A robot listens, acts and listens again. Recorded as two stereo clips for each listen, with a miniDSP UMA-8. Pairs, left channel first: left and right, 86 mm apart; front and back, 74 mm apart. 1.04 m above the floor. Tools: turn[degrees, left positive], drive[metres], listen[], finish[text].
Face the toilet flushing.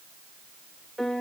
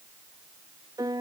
Action: listen[]
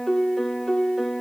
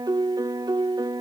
Action: listen[]
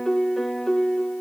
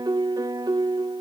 Action: finish[I can't make out a toilet flushing to turn to.]